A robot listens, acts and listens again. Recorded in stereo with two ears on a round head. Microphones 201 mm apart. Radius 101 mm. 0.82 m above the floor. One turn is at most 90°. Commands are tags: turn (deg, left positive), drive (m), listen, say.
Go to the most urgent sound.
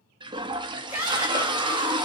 <turn deg="-30"/>
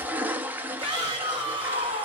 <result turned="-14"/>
<turn deg="-90"/>
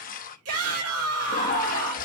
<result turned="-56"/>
<turn deg="-90"/>
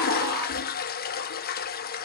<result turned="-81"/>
<turn deg="-20"/>
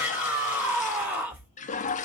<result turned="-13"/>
<turn deg="-10"/>
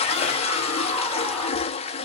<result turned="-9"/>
<listen/>
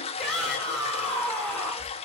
<drive m="1.0"/>
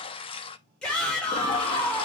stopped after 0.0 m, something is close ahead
<say>Blocked. The shout is further on, straight ahead.</say>